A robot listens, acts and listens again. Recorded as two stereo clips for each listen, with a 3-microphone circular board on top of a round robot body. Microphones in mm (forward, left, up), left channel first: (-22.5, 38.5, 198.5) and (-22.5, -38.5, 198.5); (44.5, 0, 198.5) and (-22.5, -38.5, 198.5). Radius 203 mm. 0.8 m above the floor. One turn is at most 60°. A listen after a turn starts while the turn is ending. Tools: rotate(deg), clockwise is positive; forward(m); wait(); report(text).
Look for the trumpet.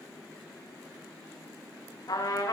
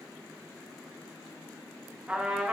rotate(-60)
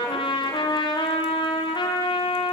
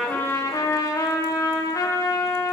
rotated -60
rotate(-60)
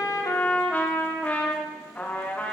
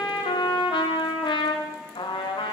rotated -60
rotate(-20)
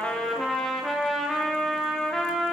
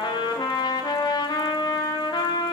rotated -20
report("Found it: a trumpet, straight ahead.")